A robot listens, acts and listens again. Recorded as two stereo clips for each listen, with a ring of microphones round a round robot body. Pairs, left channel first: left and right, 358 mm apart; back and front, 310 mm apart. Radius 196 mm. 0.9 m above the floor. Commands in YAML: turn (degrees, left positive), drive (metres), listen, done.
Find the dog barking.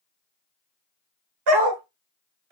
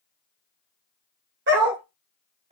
turn: -75
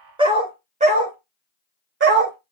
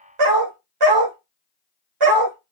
turn: -30
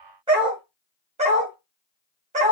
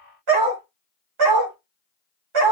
turn: -20
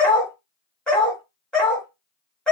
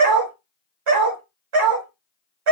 done: "Facing the dog barking."